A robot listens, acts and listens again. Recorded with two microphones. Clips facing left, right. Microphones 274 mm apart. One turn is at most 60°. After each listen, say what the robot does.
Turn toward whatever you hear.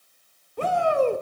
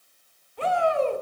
Turn 50° left.
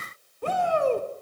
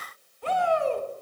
Turn 60° left.
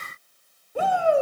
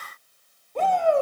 Turn 10° left.
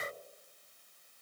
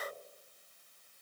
Keep listening.
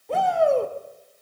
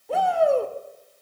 Found it: a shout, straight ahead.